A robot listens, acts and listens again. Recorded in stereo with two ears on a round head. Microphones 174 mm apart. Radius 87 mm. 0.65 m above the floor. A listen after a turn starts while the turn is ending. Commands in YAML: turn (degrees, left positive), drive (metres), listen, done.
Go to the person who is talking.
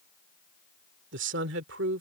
turn: -65
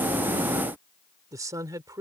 turn: -20
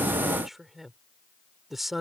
drive: 1.0
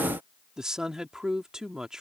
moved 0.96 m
drive: 1.0
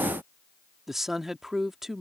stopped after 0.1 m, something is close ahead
done: "Arrived at the woman speaking, straight ahead."